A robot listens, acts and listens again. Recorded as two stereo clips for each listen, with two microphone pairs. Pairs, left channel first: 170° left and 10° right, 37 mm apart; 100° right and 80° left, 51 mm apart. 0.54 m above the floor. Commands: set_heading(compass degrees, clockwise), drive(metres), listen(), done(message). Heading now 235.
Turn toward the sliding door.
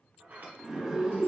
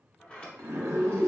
set_heading(270)
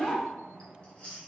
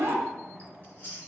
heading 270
set_heading(280)
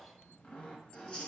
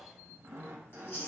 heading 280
listen()
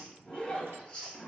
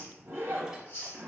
listen()
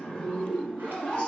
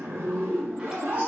done("Facing where the sliding door came from. I can't hear it now.")